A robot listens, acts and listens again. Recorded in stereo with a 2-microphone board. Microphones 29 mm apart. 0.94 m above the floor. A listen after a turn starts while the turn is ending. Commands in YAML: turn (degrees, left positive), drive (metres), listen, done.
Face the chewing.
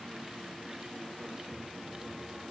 listen: true
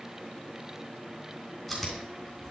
turn: 30
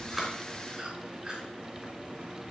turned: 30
turn: -25
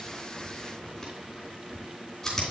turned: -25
turn: 15
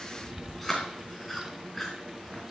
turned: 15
done: "Found it: chewing, straight ahead."